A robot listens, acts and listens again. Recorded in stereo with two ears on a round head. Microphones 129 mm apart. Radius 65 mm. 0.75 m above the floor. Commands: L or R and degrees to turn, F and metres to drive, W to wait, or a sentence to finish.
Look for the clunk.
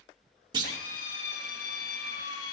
R30
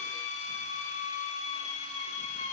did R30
W
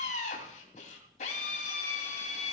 I heard a clunk, but can't make it out now. It was about straight ahead or 120° right.